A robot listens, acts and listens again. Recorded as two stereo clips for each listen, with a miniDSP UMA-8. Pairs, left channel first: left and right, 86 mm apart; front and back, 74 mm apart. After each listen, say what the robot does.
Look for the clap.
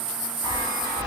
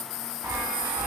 Keep listening.
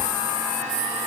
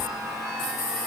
Keep listening.
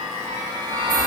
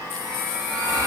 I can't make out a clap to turn to.